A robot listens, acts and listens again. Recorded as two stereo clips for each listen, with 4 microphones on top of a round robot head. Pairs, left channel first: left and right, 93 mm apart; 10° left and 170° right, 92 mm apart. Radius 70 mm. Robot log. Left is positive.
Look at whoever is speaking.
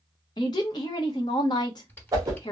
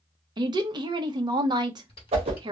note: The woman speaking: 150° left.
cmd yaw +150
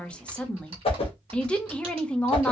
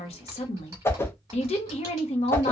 note: The woman speaking is now 10° left.
cmd yaw +10
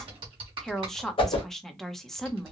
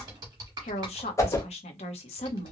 end: Facing the woman speaking, under 1 m away.